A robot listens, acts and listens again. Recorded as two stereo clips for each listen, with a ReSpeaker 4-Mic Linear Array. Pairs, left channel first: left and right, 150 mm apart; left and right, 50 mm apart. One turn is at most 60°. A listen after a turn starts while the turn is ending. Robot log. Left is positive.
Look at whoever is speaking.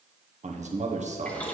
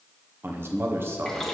note: The man speaking: about 50° right or 130° right.
cmd yaw -50
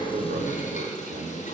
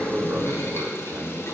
note: So it is at 75° right.
cmd yaw -60
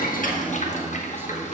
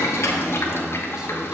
note: The man speaking is now 15° right.
cmd yaw -15
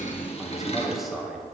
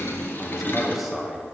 end: Facing the man speaking.